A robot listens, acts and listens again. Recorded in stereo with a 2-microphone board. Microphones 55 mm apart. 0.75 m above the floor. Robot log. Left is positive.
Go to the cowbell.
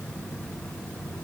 cmd idle
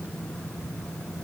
cmd idle
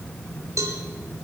cmd yaw -90
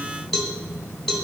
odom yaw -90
cmd fwd 1.0
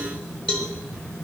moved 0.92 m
note: The cowbell is now 15° left.
cmd yaw +15
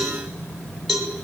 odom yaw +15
cmd fwd 1.0
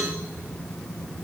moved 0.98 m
cmd idle
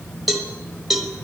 cmd fwd 1.0
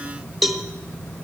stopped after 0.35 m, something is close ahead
end: I am next to the cowbell.